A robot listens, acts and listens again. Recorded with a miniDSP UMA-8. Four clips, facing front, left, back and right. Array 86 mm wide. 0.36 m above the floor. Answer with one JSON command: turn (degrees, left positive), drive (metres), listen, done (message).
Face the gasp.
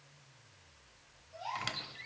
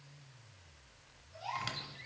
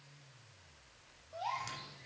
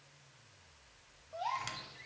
{"turn": -120}
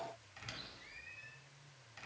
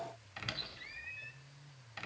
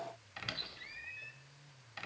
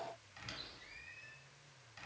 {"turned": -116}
{"done": "Facing where the gasp came from. I can't hear it now."}